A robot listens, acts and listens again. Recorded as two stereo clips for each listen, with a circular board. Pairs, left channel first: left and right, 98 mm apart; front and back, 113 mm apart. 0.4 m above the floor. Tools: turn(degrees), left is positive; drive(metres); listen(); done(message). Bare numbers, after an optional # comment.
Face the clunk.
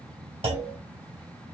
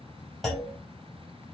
# The clunk: 90° right.
turn(-90)
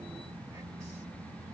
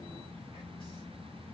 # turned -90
done("I heard a clunk from this way, but can't make it out now.")